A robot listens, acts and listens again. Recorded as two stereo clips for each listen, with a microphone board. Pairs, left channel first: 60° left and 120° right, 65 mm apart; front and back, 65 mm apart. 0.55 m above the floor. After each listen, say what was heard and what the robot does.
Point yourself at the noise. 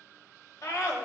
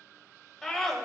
The scream: 85° left. Turn 85° left.
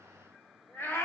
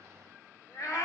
The scream is now 15° left. Turn 15° left.
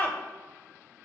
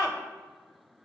Found it: a scream, straight ahead.